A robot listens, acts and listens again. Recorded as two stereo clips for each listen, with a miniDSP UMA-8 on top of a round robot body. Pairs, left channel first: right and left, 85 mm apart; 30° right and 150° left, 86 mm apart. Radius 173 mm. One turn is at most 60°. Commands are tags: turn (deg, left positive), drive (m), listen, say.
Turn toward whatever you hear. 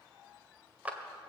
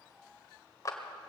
<turn deg="15"/>
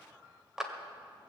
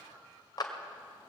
<say>Facing the clap, 1 to 2 m away.</say>